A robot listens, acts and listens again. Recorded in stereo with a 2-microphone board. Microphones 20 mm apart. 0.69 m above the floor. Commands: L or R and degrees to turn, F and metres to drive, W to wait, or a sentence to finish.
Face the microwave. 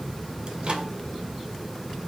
R65
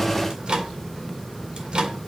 R45
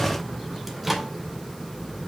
Found it: a microwave, straight ahead.